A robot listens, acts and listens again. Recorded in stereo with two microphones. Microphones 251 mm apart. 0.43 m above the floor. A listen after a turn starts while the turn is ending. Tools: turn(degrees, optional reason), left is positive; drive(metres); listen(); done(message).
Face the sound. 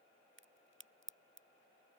turn(degrees=-50, reason="The crack: about 50° right or 130° right.")
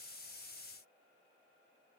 listen()
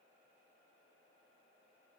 done("I heard a crack, but can't make it out now. It was about straight ahead or 80° right.")